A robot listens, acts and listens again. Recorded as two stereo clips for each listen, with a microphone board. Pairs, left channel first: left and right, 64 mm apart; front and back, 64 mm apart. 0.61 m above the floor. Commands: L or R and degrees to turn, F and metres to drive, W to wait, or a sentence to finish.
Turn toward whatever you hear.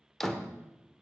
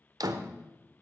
L175
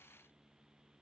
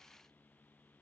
I heard a door slam from this way, but can't make it out now.